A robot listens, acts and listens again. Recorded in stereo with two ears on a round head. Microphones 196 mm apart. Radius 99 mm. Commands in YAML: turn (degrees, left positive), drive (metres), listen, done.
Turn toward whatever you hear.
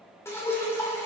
turn: 30
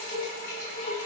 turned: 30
turn: 135
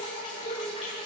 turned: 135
turn: 25
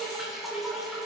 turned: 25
done: "Facing the dripping, 2 to 4 m away."